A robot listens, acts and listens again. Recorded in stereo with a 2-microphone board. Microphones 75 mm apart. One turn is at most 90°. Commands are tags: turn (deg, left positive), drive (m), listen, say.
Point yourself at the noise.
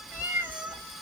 <turn deg="-15"/>
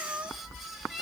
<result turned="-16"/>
<turn deg="-30"/>
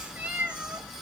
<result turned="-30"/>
<turn deg="-30"/>
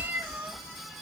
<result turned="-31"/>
<turn deg="-90"/>
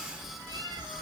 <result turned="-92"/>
<turn deg="-60"/>
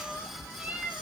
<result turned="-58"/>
<turn deg="-20"/>
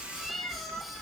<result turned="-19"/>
<say>Facing the cat meowing.</say>